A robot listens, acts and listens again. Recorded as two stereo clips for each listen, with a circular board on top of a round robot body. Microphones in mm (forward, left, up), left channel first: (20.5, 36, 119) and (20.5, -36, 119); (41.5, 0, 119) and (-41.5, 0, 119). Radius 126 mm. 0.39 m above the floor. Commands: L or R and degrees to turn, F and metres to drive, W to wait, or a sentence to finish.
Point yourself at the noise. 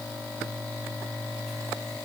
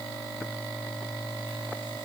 W
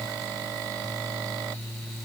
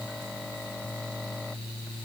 W
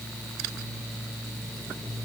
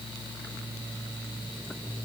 I can't make out anything.